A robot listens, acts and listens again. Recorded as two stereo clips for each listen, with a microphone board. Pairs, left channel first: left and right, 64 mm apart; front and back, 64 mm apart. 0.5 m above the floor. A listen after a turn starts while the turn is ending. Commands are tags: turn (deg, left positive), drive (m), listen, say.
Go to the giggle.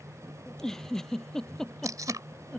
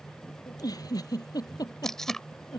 <drive m="1.0"/>
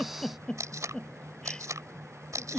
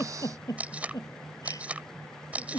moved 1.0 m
<turn deg="10"/>
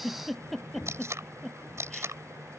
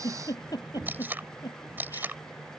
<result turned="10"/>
<drive m="1.0"/>
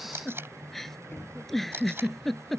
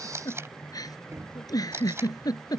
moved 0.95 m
<drive m="1.0"/>
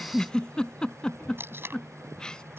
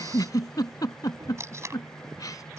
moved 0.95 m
<turn deg="15"/>
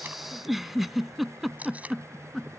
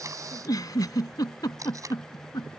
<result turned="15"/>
<drive m="1.0"/>
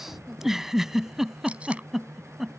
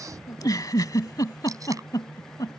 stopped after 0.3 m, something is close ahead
<say>I am next to the giggle.</say>